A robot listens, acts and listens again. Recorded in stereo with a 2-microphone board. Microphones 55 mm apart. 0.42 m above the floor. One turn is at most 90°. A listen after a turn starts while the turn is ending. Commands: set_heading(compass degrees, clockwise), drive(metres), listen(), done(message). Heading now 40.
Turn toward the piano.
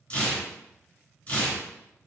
listen()
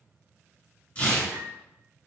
set_heading(85)
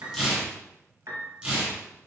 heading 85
set_heading(175)
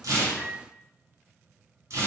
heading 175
set_heading(165)
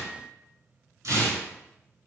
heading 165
listen()
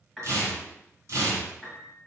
done("Found it: a piano, straight ahead.")